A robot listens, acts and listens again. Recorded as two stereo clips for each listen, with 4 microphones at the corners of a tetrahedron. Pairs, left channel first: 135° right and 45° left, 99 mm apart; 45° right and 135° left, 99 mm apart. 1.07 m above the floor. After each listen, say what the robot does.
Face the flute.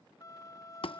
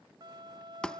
Turn 175° left.
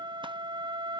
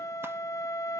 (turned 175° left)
Turn 10° left.
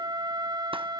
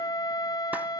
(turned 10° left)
Facing the flute.